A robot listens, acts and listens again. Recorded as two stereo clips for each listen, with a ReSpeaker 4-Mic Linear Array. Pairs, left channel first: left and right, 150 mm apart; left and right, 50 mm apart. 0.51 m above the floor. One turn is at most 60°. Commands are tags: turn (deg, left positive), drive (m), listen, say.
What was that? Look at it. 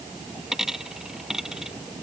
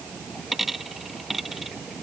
<turn deg="-30"/>
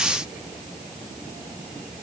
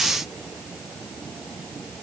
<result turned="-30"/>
<listen/>
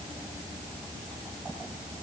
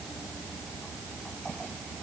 <say>I heard a dropped coin, but can't make it out now. It was about 25° left or 145° right.</say>